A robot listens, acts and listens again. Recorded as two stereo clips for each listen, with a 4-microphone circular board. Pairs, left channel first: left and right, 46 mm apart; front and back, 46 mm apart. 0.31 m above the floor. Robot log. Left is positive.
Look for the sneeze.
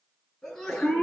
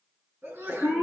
note: The sneeze: 170° left.
cmd yaw +170
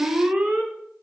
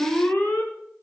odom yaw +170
end: Facing where the sneeze came from. I can't hear it now.